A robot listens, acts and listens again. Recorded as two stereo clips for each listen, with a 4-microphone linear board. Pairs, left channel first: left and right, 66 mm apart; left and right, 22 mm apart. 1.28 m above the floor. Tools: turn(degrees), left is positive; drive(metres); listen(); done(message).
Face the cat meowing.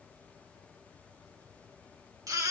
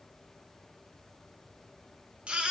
listen()
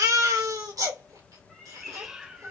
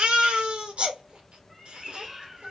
turn(degrees=-30)
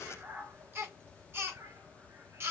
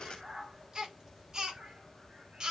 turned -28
turn(degrees=-140)
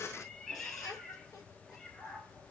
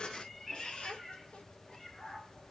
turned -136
turn(degrees=10)
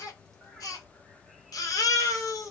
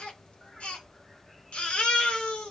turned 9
done("Facing the cat meowing, 2 to 4 m away.")